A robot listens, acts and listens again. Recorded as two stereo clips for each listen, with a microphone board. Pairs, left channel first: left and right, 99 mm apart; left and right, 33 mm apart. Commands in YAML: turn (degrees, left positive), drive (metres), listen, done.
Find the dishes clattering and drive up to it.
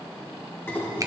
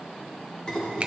turn: 25
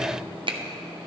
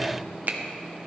listen: true
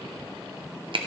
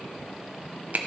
listen: true
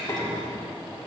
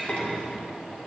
turn: 130
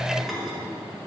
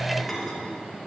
drive: 1.0
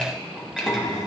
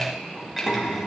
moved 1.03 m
drive: 1.0
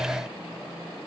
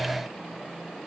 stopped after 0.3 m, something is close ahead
listen: true
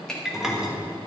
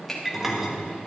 done: "I am next to the dishes clattering."